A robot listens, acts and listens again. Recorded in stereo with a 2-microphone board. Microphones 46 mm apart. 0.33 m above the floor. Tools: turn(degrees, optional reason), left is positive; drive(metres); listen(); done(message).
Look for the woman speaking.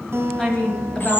turn(degrees=15, reason="The woman speaking: about 15° left or 165° left.")
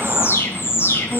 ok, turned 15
listen()
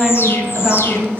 turn(degrees=155, reason="So it is at 155° left.")
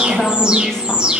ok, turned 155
turn(degrees=10, reason="The woman speaking is now 10° left.")
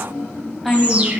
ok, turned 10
done("Found it: a woman speaking, straight ahead.")